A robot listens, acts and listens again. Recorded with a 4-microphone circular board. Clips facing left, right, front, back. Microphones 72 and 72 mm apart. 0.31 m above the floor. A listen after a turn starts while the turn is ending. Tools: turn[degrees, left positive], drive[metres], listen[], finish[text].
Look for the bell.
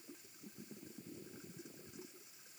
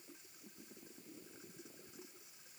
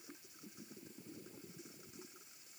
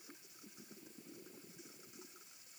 Action: listen[]
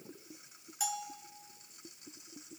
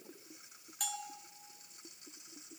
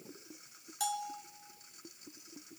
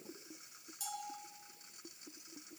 Action: finish[Facing the bell, 1 to 2 m away.]